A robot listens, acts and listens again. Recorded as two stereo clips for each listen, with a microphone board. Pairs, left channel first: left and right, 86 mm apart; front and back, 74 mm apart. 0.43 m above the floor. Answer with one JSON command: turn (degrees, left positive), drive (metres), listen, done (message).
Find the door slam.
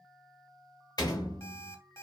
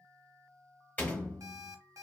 {"turn": 60}
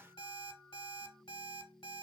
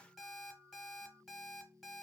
{"done": "Facing where the door slam came from. I can't hear it now."}